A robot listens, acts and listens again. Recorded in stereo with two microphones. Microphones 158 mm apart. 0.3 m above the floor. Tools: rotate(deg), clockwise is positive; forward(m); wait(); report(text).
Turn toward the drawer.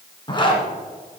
wait()
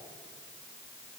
wait()
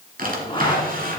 rotate(65)
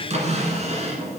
rotate(45)
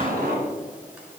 wait()
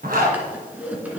rotate(10)
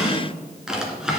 report("Found it: a drawer, straight ahead.")